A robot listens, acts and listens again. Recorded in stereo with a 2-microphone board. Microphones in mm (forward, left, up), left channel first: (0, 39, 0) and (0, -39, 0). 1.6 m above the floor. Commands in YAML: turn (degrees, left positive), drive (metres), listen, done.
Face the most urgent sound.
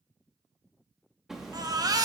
turn: -55
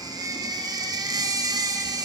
turn: -60
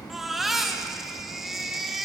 done: "Facing the baby crying, 1 to 2 m away."